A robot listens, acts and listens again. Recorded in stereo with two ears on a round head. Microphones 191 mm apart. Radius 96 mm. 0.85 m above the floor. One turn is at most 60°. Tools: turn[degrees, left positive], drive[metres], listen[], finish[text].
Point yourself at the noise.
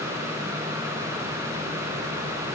Action: listen[]
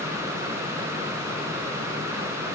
Action: listen[]
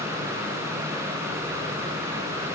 Action: finish[I can't make out anything to turn to.]